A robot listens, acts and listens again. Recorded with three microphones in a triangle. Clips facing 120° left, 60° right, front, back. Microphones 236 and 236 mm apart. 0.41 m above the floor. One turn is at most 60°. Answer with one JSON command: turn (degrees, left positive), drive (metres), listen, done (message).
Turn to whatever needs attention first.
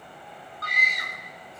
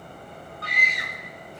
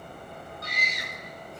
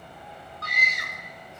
{"turn": 60}
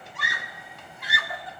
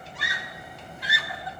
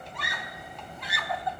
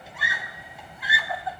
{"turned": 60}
{"turn": 60}
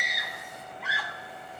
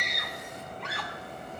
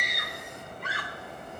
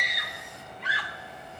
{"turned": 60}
{"turn": 35}
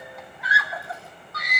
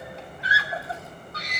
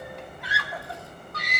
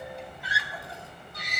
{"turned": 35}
{"done": "Facing the scream."}